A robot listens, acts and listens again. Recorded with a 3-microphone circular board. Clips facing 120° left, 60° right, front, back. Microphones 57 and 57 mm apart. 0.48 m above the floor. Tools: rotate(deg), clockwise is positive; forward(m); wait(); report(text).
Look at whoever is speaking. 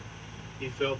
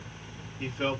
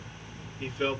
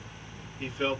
rotate(110)
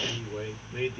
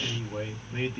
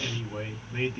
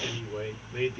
rotate(30)
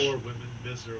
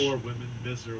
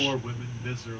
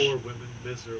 rotate(-15)
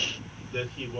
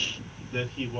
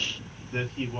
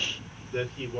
report("Found it: a man speaking, straight ahead.")